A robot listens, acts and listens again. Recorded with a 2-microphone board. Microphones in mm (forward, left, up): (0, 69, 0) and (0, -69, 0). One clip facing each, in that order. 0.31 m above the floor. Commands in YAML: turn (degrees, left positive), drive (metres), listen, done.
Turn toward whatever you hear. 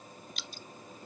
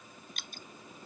turn: -50
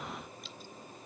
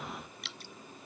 turn: -80
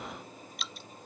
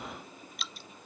done: "Facing the dripping."